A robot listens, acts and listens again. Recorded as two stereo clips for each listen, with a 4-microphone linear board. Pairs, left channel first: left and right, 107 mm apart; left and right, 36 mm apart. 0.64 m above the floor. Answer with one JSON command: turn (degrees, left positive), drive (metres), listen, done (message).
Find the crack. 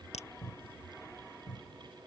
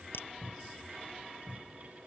{"turn": 90}
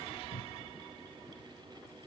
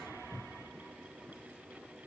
{"done": "Facing where the crack came from. I can't hear it now."}